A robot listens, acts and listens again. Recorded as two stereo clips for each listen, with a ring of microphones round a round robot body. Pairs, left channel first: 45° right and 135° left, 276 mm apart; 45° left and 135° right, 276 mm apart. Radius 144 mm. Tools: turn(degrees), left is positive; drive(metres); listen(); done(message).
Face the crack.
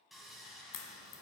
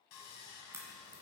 turn(degrees=-55)
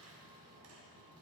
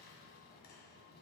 done("I heard a crack from this way, but can't make it out now.")